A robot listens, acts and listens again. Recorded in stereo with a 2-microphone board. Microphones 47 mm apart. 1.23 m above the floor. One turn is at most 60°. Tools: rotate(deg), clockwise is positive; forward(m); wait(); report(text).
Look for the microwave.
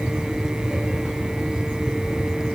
wait()
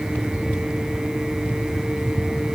wait()
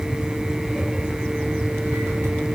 report("I can't make out a microwave to turn to.")